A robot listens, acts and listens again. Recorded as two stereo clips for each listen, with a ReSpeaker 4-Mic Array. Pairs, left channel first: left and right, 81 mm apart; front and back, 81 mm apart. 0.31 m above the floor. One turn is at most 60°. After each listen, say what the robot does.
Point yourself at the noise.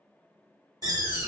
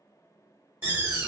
Turn 60° right.
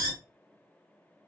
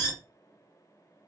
Turn 55° right.
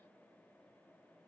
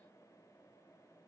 I heard a door slam from this way, but can't make it out now.